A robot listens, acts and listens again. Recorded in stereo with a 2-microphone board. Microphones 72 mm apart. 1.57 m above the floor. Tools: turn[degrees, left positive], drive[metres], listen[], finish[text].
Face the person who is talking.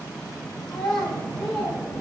Action: turn[30]
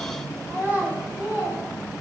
Thought: So it is at 20° right.
Action: turn[-20]
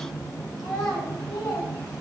Action: finish[Found it: a child speaking, straight ahead, over 4 m away.]